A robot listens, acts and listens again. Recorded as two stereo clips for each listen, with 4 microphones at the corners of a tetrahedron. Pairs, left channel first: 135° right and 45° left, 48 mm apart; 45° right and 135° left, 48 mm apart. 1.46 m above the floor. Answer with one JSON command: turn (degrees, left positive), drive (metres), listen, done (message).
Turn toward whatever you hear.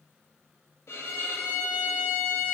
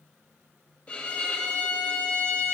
{"turn": -115}
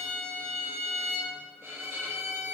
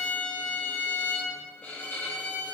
{"done": "Facing the violin, 2 to 4 m away."}